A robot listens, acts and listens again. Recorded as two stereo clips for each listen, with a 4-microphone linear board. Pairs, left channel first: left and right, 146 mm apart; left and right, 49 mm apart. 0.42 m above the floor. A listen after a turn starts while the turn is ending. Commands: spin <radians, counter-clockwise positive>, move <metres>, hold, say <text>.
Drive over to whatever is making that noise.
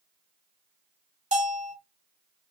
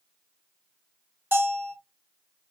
spin -0.87
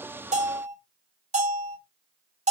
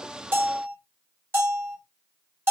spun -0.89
spin -1.13
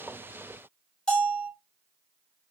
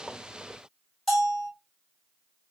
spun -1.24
move 1.0
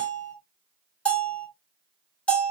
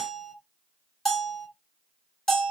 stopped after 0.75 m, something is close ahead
spin 0.17
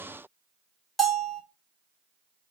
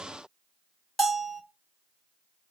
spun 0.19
say Arrived at the bell, straight ahead.